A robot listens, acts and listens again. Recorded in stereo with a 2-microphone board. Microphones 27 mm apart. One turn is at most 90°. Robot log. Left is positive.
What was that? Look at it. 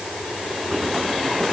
cmd idle
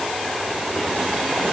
cmd idle
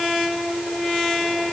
end: I can't make out anything to turn to.